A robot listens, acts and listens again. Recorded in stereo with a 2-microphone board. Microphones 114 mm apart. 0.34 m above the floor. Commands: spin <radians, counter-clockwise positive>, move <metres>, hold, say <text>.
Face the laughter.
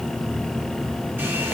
hold
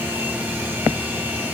hold
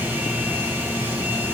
say I can't make out laughter.